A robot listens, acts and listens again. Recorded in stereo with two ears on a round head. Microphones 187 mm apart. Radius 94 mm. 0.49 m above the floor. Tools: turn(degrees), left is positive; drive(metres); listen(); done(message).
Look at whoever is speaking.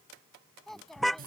turn(degrees=30)
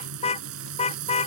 listen()
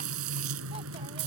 listen()
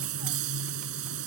done("I heard a child speaking, but can't make it out now. It was about 30° right or 150° left.")